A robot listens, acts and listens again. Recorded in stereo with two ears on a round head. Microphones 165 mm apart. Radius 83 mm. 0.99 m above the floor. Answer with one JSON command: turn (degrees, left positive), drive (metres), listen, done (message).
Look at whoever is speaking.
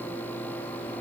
{"listen": true}
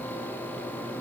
{"listen": true}
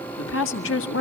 {"turn": 75}
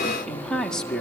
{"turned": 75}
{"done": "Found it: a woman speaking, straight ahead."}